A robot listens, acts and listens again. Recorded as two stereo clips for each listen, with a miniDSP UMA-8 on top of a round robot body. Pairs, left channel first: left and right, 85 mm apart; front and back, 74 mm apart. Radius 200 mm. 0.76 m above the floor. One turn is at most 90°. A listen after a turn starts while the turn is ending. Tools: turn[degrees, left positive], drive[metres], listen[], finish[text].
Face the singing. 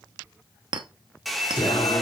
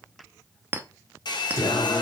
Thought: The singing: 50° left.
Action: turn[50]
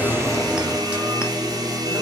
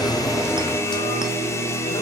Thought: The singing is now 25° right.
Action: turn[-25]
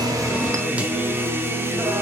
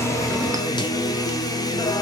Thought: The singing is now 30° right.
Action: turn[-30]
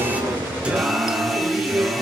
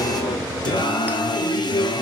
Thought: The singing is now 15° right.
Action: turn[-15]
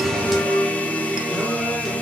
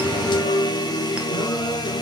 Action: finish[Found it: singing, straight ahead, 1 to 2 m away.]